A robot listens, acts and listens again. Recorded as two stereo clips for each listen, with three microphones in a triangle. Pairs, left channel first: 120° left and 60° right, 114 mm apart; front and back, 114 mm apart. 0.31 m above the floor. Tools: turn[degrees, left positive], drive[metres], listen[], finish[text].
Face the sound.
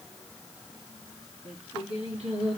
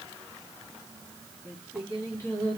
Thought: The singing: 65° right.
Action: turn[-65]
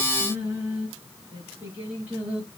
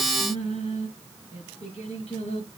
Thought: The singing is now 15° left.
Action: turn[15]
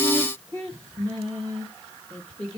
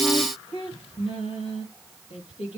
Action: finish[Facing the singing, over 4 m away.]